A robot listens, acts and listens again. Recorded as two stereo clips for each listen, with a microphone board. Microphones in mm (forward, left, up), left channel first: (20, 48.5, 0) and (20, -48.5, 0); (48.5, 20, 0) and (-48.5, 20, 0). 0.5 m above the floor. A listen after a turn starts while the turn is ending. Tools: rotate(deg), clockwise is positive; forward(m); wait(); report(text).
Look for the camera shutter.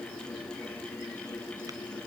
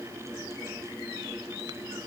wait()
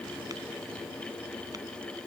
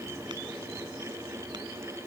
wait()
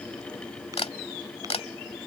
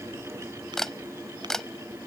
rotate(-85)
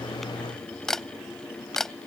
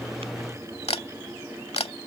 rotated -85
report("Facing the camera shutter.")